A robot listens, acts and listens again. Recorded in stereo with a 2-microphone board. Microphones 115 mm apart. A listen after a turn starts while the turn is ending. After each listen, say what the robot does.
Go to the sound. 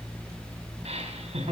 Turn 70° right.
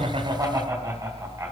Turn 30° right.
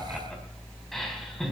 Drive 1.0 m forward.
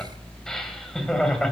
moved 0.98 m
Drive 1.0 m forward.
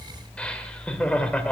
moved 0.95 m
Turn 15° left.
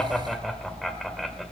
Drive 1.0 m forward.
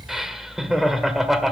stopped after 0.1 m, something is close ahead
Arrived at the laughter, straight ahead.